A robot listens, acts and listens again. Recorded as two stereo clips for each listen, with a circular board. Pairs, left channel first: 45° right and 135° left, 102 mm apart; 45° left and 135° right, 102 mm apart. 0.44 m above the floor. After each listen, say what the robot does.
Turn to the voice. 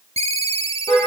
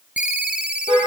Keep listening.
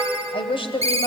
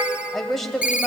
Turn 40° right.
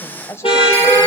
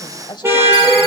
Turn 15° left.
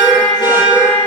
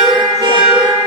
Keep listening.
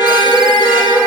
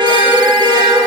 Keep listening.
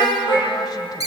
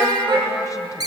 Facing where the woman speaking came from. I can't hear it now.